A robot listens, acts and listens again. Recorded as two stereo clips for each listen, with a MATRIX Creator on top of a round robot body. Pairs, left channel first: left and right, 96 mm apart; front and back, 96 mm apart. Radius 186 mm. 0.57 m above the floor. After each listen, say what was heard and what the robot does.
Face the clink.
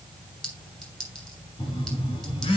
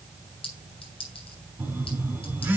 Facing the clink.